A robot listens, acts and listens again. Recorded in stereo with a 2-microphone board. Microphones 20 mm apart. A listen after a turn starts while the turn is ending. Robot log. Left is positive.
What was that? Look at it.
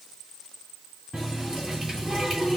note: The running tap: about 30° right or 150° right.
cmd yaw -30
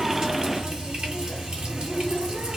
note: So it is at 120° right.
cmd yaw -120
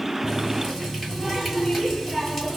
end: Facing the running tap.